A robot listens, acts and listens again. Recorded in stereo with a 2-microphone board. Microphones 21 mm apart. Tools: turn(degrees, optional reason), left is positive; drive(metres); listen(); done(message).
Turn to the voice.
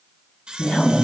turn(degrees=65, reason="The woman speaking: about 65° left or 115° left.")
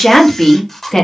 turn(degrees=20, reason="So it is at 20° left.")
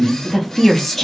turn(degrees=10, reason="The woman speaking is now 10° left.")
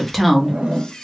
done("Found it: a woman speaking, straight ahead, 1 to 2 m away.")